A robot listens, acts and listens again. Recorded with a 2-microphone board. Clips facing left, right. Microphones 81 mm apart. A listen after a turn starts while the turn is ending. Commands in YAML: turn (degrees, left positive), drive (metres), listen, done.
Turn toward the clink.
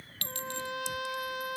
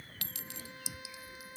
turn: -30
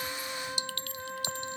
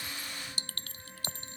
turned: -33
turn: -140
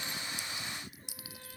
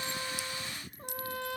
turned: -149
done: "Facing the clink."